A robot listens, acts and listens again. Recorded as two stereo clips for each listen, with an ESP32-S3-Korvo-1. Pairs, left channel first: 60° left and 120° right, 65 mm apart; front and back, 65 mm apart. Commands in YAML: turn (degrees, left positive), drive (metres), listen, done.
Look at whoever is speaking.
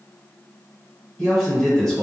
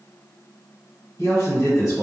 turn: -15
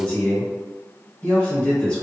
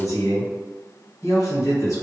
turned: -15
done: "Found it: a man speaking, straight ahead."